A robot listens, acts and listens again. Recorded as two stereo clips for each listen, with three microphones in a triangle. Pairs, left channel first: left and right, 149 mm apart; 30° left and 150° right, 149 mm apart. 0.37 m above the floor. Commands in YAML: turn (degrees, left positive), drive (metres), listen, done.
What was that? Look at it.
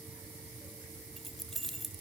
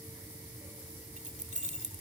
turn: 180
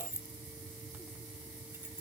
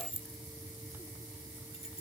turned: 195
turn: -15
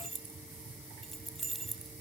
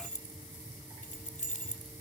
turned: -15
done: "Found it: keys jangling, straight ahead."